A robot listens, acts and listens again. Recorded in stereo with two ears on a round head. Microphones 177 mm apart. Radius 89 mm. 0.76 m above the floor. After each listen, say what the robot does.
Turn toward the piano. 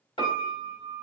Turn 25° left.
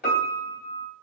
Turn 130° left.
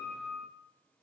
Found it: a piano, straight ahead.